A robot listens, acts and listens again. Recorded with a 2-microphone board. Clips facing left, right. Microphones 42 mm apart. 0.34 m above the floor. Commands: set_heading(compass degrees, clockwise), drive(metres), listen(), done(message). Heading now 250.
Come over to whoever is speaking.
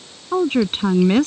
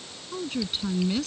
set_heading(195)
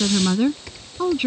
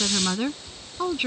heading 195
drive(1.0)
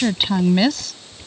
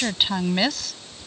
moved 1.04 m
drive(1.0)
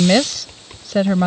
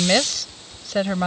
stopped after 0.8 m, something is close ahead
done("I am next to the woman speaking.")